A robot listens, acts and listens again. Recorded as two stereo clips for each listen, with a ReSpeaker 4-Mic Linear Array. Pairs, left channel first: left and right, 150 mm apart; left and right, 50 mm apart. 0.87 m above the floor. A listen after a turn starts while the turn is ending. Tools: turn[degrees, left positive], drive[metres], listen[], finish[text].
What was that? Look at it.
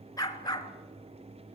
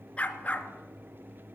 Thought: The dog barking: about 30° left or 150° left.
Action: turn[30]
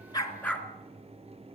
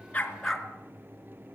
Thought: So it is at 10° left.
Action: turn[10]
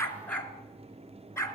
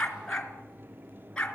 Thought: The dog barking is now 20° left.
Action: turn[20]
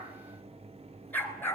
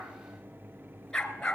Thought: The dog barking is now 15° left.
Action: turn[15]
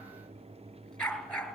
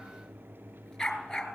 Action: finish[Facing the dog barking, 2 to 4 m away.]